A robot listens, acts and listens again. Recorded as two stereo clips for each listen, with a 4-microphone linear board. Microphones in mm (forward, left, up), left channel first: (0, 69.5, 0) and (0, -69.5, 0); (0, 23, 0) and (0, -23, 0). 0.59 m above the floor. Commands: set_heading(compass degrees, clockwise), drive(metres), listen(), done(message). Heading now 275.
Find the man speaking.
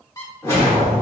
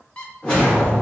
listen()
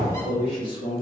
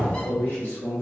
set_heading(240)
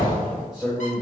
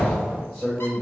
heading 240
set_heading(250)
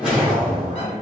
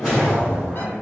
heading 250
done("Found it: a man speaking, straight ahead, 2 to 4 m away.")